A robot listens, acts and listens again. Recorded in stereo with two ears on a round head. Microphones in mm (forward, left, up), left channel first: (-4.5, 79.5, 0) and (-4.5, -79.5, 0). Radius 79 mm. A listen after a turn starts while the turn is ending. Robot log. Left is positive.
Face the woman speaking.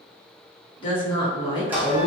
note: The woman speaking: about 30° left or 150° left.
cmd yaw +30
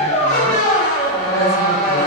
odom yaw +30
cmd idle
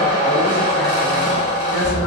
cmd idle
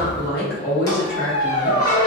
note: So it is at 120° left.
cmd yaw +120
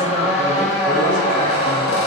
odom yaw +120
cmd idle
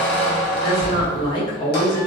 note: The woman speaking is now 25° left.
cmd yaw +25
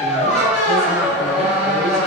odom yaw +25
cmd idle
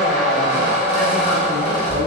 cmd idle
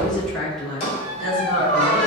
end: Found it: a woman speaking, straight ahead, 1 to 2 m away.